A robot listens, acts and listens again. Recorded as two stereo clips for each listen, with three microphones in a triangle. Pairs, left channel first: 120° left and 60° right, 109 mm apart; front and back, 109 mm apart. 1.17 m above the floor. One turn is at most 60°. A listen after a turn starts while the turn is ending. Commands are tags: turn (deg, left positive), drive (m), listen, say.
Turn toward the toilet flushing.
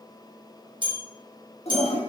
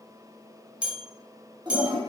<turn deg="60"/>
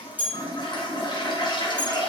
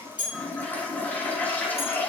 <turn deg="60"/>
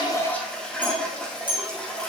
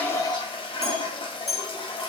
<turn deg="40"/>
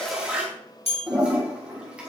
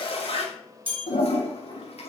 <turn deg="20"/>
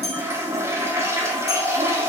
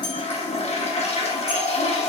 <say>Facing the toilet flushing.</say>